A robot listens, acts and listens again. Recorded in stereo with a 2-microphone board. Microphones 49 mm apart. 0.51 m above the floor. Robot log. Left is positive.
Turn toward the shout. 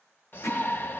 note: The shout: about 50° left or 130° left.
cmd yaw +50
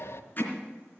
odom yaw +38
note: So it is at 85° left.
cmd yaw +85
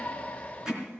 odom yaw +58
note: The shout is now 30° left.
cmd yaw +30
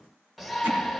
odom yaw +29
end: Found it: a shout, straight ahead.